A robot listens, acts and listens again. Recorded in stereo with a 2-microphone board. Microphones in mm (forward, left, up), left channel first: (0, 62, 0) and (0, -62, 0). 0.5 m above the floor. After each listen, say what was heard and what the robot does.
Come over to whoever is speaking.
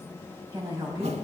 The woman speaking: about 30° right or 150° right. Turn 30° right.
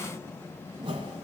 Keep listening.
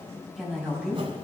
Drive 1.0 m forward.
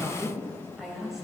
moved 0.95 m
Drive 1.0 m forward.
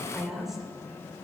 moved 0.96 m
Drive 1.0 m forward.
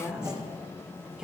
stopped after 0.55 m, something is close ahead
The woman speaking is now 10° right. Turn 10° right.
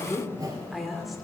I am next to the woman speaking.